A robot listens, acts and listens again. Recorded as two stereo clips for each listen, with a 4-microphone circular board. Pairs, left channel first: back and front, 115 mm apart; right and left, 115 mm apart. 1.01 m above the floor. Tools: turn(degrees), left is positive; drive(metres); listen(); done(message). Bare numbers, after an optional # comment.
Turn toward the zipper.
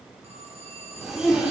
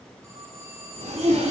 # The zipper: 85° left.
turn(85)
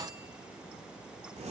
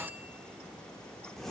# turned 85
done("Found it: a zipper, straight ahead, 2 to 4 m away.")